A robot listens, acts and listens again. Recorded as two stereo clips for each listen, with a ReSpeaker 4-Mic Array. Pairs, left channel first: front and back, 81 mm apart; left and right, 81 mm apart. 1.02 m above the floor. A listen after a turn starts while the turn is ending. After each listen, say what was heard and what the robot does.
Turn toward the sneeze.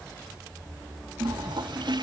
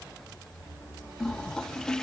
Keep listening.
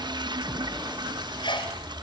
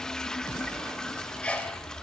The sneeze: 15° left. Turn 15° left.
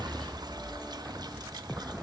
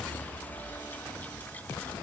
I heard a sneeze from this way, but can't make it out now.